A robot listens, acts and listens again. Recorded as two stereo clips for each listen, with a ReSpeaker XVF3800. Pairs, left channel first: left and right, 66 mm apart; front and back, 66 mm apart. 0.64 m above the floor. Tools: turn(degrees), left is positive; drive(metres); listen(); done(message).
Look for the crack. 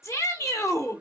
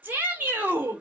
listen()
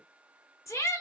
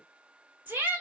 listen()
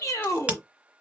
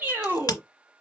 turn(degrees=-20)
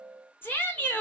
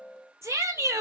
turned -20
done("Facing where the crack came from. I can't hear it now.")